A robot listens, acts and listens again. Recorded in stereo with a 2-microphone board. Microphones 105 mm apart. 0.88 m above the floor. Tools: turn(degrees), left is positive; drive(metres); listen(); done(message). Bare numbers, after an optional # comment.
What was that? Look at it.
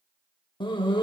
# The dog barking: about 50° left or 130° left.
turn(50)
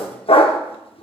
# So it is at 75° left.
turn(75)
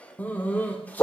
# The dog barking is now 15° left.
turn(15)
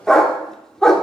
done("Facing the dog barking.")